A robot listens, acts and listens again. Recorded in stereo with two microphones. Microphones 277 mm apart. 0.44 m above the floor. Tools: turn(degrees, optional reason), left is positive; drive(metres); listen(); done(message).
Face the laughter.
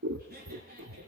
turn(degrees=-40, reason="The laughter: about 40° right or 140° right.")
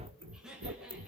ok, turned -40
done("Facing the laughter, over 4 m away.")